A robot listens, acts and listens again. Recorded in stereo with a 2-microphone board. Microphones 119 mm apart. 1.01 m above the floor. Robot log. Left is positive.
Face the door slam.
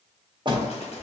note: The door slam: about 40° right or 140° right.
cmd yaw -40
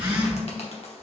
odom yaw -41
cmd idle
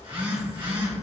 end: I heard a door slam, but can't make it out now. It was about straight ahead or 100° right.